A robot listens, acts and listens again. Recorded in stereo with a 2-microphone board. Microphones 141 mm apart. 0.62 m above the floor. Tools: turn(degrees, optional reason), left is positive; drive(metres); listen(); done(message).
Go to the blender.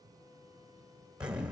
listen()
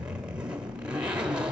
listen()
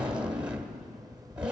done("I can't make out a blender, only a zipper.")